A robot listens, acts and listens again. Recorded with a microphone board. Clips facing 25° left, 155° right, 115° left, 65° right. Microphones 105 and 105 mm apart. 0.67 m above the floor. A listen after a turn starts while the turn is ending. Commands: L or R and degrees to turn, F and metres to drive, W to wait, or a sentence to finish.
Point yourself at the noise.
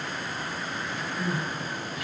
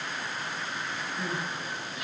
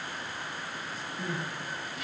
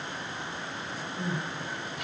R90
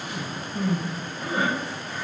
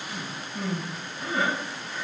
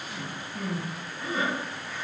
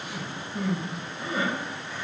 R15
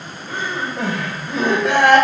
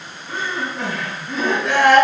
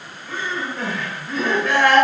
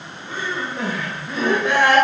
Found it: crying, straight ahead.